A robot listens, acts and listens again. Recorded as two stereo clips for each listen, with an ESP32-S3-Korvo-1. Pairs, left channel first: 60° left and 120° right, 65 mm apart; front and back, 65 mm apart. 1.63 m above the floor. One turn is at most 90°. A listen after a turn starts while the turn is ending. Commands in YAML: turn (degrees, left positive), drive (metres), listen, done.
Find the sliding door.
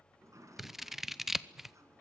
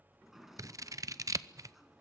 turn: -90
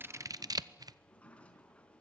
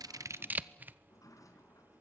done: "Facing the sliding door, 2 to 4 m away."